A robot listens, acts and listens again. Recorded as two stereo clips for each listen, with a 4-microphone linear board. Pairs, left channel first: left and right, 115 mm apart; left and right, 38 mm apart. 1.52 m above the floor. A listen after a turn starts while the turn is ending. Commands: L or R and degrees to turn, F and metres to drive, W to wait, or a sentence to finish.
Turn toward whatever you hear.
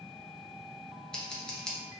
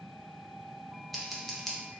L30
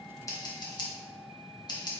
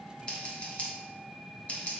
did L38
L135
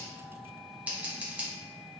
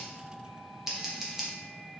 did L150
R15
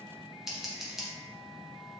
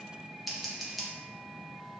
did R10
Facing the scissors.